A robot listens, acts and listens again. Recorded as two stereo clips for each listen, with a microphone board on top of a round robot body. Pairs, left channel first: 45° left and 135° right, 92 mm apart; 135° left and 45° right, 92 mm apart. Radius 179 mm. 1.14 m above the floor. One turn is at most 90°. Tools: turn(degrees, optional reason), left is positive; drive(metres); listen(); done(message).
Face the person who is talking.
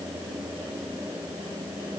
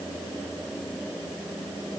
listen()
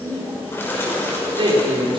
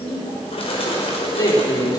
turn(degrees=-90, reason="The man speaking: 175° right.")
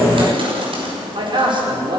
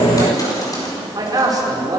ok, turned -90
turn(degrees=-90, reason="The man speaking is now 95° right.")
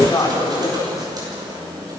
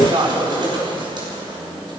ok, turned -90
turn(degrees=-10, reason="The man speaking is now 10° right.")
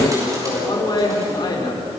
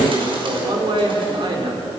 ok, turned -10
done("Found it: a man speaking, straight ahead, over 4 m away.")